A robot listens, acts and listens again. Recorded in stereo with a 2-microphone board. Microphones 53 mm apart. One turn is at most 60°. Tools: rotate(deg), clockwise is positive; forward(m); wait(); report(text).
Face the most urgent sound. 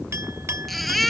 rotate(-30)
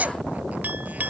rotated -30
rotate(30)
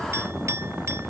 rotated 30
wait()
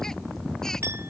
wait()
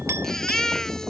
rotate(-10)
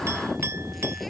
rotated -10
wait()
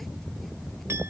wait()
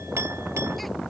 report("I heard a baby crying from this way, but can't make it out now.")